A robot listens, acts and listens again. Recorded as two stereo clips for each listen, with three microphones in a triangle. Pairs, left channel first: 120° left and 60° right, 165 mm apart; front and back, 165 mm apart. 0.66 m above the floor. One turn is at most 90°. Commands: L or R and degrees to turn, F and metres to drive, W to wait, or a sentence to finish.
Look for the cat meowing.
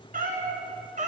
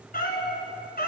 R20
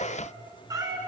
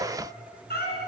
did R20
L10
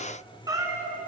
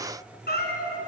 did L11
L15
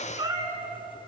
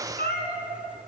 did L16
L10
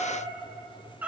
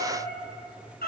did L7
L20
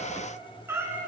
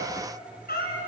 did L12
L15
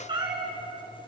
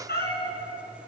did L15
Found it: a cat meowing, straight ahead, 2 to 4 m away.